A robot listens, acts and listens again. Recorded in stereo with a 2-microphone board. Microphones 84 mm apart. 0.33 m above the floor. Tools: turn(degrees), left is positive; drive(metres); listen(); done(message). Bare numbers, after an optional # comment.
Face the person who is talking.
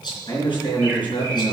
# The man speaking: about 70° left or 110° left.
turn(70)
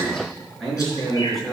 done("Facing the man speaking.")